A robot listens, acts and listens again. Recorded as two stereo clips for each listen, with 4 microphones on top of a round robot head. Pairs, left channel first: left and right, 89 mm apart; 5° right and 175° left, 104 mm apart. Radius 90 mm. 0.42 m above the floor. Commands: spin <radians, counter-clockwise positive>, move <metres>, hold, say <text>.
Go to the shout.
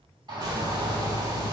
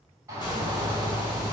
spin -2.09
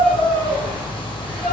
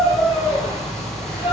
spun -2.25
spin 0.17
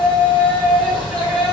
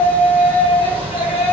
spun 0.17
move 1.0
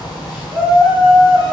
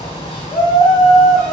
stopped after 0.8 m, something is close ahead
say I am next to the shout.